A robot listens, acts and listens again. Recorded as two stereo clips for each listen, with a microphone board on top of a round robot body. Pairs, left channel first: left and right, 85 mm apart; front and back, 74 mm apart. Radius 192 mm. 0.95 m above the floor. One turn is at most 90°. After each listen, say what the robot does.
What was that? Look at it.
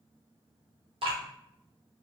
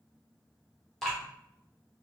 Turn 85° right.
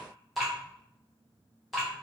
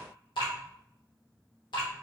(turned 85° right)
Facing the dripping.